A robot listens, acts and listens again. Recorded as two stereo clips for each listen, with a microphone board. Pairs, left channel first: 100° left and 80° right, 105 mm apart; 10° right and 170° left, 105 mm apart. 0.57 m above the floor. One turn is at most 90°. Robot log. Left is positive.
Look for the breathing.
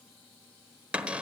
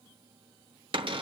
cmd idle
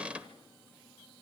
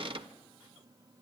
cmd idle
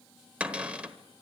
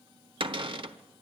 end: I can't make out breathing to turn to.